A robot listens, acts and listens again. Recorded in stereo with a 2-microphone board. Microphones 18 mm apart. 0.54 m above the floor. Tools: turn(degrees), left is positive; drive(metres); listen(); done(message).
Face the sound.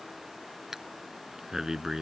turn(degrees=-30)
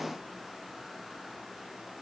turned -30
listen()
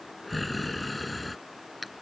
done("Facing the breathing.")